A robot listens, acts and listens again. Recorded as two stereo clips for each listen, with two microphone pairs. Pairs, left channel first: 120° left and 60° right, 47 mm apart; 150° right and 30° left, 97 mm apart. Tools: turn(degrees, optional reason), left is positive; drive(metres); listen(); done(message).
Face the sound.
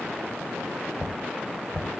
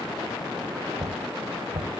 turn(degrees=30, reason="The knocking: 30° left.")
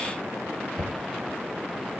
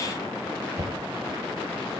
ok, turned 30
turn(degrees=-10, reason="The knocking is now 10° right.")
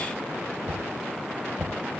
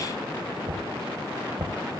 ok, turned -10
done("Facing the knocking.")